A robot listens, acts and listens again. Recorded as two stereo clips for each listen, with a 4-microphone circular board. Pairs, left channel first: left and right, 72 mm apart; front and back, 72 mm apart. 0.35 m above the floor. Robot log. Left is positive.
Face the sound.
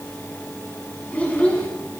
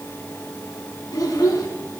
note: The child speaking: 20° left.
cmd yaw +20
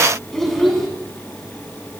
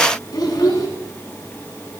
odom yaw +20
end: Found it: a child speaking, straight ahead, 2 to 4 m away.